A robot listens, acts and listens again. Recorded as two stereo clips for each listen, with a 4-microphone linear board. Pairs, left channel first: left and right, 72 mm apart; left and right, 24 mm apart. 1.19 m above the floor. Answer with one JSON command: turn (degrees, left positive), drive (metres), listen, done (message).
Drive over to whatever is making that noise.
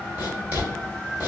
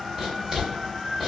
{"turn": -30}
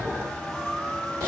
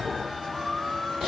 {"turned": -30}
{"turn": -125}
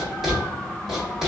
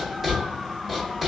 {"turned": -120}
{"drive": 1.0}
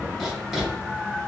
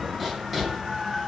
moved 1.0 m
{"drive": 1.0}
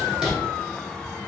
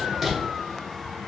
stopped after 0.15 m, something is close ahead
{"turn": -10}
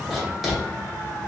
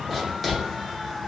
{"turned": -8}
{"done": "Arrived at the writing, straight ahead."}